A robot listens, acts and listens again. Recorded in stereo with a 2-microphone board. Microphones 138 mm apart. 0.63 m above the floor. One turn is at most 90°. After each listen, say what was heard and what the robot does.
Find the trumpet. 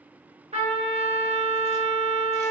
The trumpet: about 45° right or 135° right. Turn 45° right.
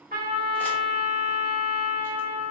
So it is at 85° right. Turn 85° right.
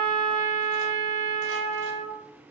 The trumpet is now 50° right. Turn 50° right.
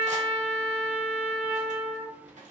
The trumpet is now 15° right. Turn 15° right.
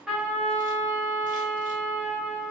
Found it: a trumpet, straight ahead, 1 to 2 m away.